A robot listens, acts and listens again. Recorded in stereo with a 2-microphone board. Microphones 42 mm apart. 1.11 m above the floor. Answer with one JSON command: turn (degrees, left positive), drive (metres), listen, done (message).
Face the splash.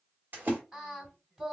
{"turn": -50}
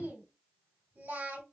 {"listen": true}
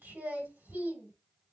{"done": "I heard a splash, but can't make it out now. It was about straight ahead or 80° right."}